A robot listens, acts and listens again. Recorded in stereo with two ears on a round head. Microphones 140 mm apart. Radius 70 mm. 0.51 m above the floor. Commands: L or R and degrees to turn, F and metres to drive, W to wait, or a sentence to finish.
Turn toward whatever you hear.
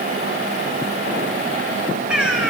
R30
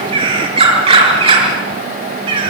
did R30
R145
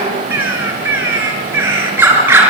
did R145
R15
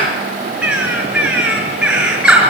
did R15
Found it: a bird, straight ahead.